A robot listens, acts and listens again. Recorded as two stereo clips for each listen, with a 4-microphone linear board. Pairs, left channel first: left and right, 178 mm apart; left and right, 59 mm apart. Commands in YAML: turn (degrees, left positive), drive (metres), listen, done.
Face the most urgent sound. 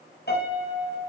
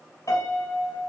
listen: true
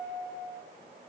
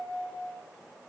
listen: true
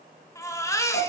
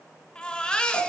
turn: 15
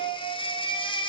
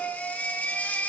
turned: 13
turn: 150
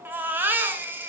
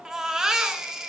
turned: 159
turn: -10
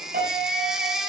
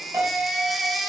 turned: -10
done: "Facing the baby crying."